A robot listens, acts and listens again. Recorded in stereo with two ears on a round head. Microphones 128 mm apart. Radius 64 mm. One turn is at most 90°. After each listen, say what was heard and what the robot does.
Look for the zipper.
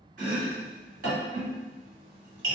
Keep listening.
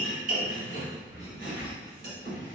Turn 30° right.
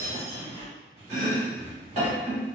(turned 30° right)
So it is at 135° right. Turn 90° right.
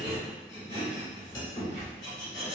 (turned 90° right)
The zipper is now 45° right. Turn 45° right.
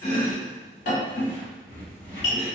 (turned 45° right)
The zipper is now 20° left. Turn 20° left.
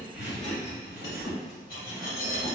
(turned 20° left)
Facing the zipper, 1 to 2 m away.